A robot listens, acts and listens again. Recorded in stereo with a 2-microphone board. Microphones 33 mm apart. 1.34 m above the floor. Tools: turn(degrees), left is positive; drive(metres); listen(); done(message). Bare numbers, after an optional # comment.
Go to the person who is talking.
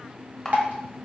listen()
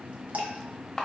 listen()
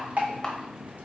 done("I can't make out anyone speaking, only a camera shutter and dripping.")